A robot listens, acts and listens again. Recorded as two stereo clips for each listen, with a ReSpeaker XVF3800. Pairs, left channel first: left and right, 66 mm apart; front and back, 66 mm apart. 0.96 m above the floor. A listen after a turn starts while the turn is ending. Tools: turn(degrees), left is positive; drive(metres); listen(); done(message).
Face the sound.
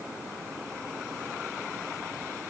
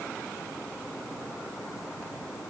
listen()
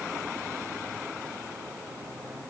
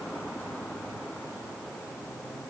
listen()
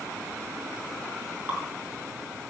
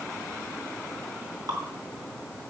turn(degrees=-155)
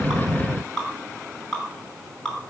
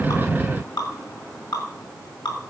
turn(degrees=10)
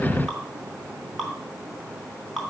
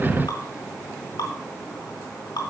done("Facing the dripping.")